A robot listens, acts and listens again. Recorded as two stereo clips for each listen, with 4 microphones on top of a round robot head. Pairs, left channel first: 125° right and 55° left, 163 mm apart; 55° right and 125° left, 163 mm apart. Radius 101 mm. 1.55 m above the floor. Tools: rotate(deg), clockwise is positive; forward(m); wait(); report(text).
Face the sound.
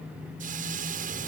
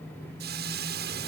rotate(-100)
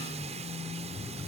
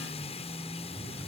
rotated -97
wait()
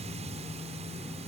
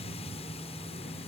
wait()
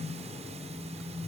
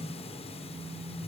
report("Facing where the hiss came from. I can't hear it now.")